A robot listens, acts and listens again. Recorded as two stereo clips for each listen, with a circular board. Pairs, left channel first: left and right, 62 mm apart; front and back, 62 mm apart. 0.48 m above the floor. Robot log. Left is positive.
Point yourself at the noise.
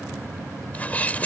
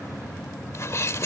note: The sneeze: 30° left.
cmd yaw +30
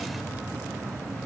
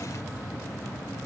end: I heard a sneeze from this way, but can't make it out now.